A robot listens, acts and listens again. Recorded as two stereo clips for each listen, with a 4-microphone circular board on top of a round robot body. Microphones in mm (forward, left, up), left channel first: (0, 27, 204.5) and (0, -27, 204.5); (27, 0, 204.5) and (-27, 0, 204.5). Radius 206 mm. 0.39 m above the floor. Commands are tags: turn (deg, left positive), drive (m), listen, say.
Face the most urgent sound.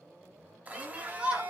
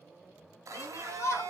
<turn deg="-20"/>
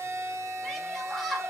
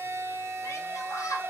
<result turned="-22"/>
<say>Found it: a shout, straight ahead.</say>